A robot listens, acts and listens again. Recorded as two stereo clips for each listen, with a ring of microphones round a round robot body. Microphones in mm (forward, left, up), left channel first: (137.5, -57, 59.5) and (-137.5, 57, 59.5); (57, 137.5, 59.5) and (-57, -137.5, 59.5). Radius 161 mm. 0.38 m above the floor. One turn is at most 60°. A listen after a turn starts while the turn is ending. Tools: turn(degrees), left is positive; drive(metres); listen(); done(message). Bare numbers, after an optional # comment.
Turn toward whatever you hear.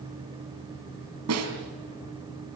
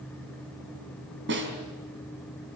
# The snare drum: 165° right.
turn(-60)
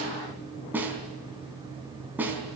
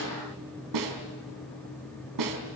# The snare drum is now 120° right.
turn(-60)
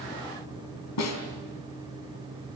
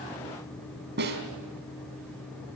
# The snare drum is now 55° right.
turn(-55)
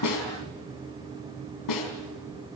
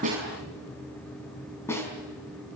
# The snare drum is now 15° right.
turn(-15)
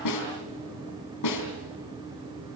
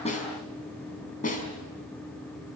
done("Found it: a snare drum, straight ahead.")